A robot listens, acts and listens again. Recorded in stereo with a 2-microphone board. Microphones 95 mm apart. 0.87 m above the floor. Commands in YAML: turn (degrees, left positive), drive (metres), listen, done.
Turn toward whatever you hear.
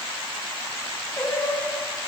turn: 20
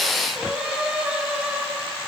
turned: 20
turn: -15
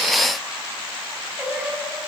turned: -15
turn: -15
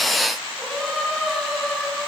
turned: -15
done: "Facing the singing."